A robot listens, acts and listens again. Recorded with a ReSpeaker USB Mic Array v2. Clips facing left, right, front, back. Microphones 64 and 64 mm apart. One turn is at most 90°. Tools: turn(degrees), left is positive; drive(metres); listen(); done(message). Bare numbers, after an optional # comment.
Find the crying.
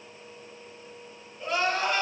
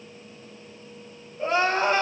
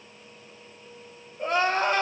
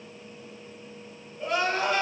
# The crying: 40° right.
turn(-40)
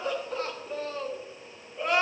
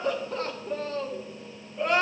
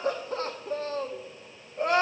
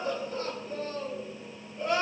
done("Found it: crying, straight ahead.")